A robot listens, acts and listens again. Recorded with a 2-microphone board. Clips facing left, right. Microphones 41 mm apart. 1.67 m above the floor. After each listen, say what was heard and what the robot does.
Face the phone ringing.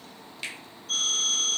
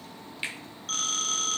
The phone ringing: about 60° right or 120° right. Turn 60° right.
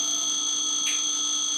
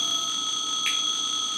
So it is at 30° right. Turn 30° right.
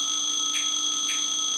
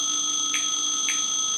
Facing the phone ringing, 1 to 2 m away.